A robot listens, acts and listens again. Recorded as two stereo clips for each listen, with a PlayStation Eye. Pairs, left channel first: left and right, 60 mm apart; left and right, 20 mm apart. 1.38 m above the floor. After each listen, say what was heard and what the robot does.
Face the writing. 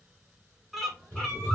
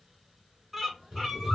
The writing: about 35° right or 145° right. Turn 35° right.
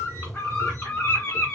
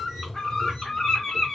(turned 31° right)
Facing the writing, 2 to 4 m away.